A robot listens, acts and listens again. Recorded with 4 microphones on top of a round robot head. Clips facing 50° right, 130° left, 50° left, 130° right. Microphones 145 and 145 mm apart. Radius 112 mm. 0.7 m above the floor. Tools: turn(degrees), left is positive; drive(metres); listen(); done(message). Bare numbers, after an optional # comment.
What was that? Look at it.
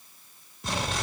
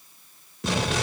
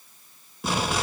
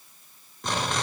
# The explosion: 135° left.
turn(135)
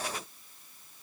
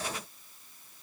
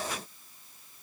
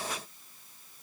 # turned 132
done("I heard an explosion from this way, but can't make it out now.")